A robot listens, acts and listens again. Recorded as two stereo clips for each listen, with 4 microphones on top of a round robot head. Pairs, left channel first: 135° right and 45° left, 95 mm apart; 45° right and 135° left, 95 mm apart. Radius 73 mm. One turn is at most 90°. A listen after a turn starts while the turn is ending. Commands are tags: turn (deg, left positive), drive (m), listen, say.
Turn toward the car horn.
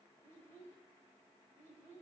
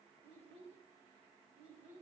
<listen/>
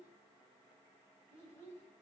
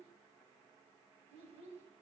<listen/>
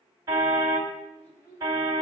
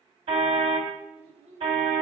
<turn deg="90"/>
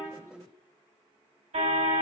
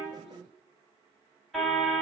<turn deg="40"/>
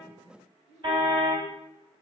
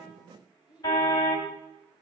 <say>Found it: a car horn, straight ahead, 2 to 4 m away.</say>